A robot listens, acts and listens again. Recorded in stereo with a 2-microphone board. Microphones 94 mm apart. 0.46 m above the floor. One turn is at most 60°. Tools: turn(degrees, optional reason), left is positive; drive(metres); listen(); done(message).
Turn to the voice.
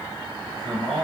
turn(degrees=30)
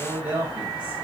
turn(degrees=-20, reason="So it is at 20° right.")
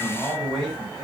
done("Facing the man speaking.")